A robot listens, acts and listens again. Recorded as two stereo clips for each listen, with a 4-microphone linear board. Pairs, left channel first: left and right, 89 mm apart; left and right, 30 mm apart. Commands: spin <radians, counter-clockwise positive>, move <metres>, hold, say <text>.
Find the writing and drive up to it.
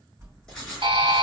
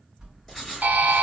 spin 0.52
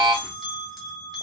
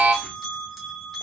hold
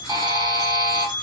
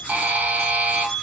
hold
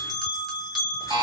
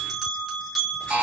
say I heard writing, but can't make it out now. It was about 20° right or 140° left. I did not reach it.